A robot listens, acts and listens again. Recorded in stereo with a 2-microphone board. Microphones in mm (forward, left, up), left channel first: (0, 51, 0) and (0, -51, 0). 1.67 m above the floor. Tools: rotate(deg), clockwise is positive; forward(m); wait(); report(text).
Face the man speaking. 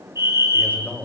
rotate(-15)
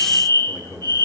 rotate(-35)
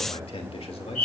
rotate(-105)
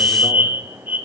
wait()
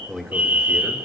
report("Found it: a man speaking, straight ahead.")